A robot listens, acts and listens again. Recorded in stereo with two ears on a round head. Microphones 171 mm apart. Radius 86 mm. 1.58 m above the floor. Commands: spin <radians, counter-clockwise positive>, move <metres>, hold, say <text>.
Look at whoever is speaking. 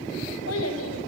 spin 1.57
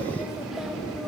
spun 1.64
hold
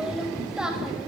say Facing the child speaking.